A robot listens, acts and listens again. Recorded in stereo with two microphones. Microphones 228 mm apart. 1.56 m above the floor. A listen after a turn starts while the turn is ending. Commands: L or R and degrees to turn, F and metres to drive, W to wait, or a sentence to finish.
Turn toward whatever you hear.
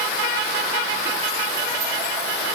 W
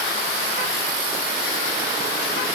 W
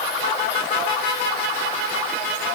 I can't make out anything to turn to.